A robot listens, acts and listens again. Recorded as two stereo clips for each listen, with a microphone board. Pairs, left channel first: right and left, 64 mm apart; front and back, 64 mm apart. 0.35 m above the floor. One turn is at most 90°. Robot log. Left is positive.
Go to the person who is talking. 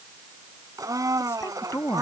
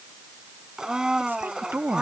note: The woman speaking: 130° right.
cmd yaw -90
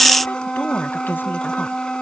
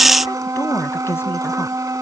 note: Nothing new. It was at 40° right.
cmd yaw -40
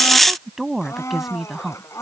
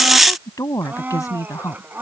cmd fwd 1.0
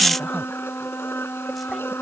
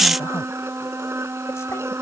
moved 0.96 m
cmd idle
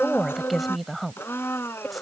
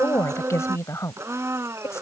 cmd fwd 1.0
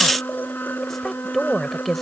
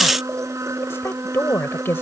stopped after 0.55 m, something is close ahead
end: Arrived at the woman speaking, straight ahead.